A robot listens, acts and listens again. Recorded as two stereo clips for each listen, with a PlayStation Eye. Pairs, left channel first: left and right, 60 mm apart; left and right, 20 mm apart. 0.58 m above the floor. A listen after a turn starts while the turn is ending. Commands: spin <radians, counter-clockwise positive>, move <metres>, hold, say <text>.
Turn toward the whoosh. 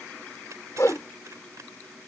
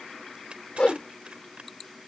spin 1.05
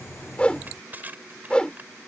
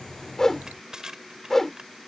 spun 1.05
spin 0.35
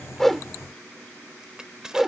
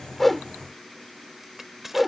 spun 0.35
say Found it: a whoosh, straight ahead.